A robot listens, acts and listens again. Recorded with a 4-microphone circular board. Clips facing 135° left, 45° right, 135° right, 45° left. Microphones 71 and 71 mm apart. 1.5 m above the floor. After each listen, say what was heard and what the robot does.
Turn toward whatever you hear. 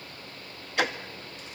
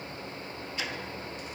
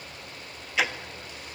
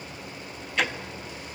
The ticking: 140° left. Turn 140° left.
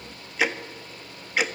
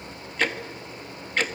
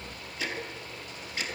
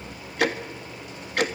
The ticking is now 50° left. Turn 50° left.
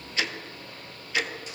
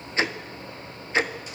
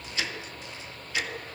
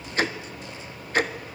Found it: ticking, straight ahead, 1 to 2 m away.